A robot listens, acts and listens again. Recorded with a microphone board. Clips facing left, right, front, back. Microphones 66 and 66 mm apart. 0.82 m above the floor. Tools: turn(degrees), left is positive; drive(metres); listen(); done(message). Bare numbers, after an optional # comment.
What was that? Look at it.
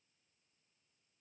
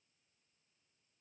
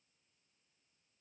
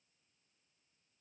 listen()
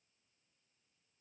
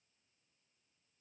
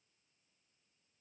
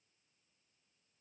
listen()
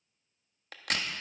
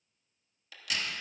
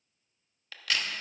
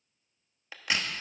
# The crack: 115° left.
turn(115)
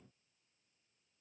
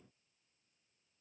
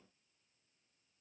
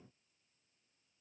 done("I heard a crack from this way, but can't make it out now.")